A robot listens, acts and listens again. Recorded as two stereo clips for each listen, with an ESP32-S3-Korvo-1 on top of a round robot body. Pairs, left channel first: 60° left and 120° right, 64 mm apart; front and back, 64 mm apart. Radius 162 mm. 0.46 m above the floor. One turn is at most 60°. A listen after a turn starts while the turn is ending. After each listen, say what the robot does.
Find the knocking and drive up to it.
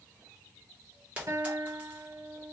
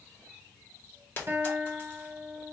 Keep listening.
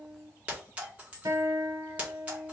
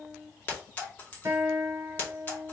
Keep listening.
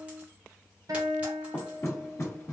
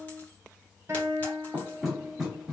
Turn 60° left.
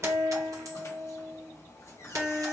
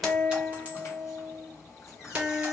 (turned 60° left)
Turn 30° left.
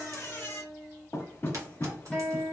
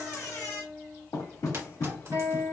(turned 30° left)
Drive 1.0 m forward.
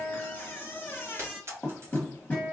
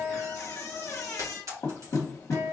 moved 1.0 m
Turn 10° left.
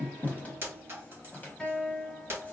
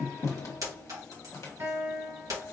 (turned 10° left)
Drive 1.0 m forward.
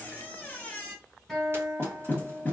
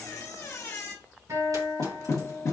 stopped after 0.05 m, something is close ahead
I am next to the knocking.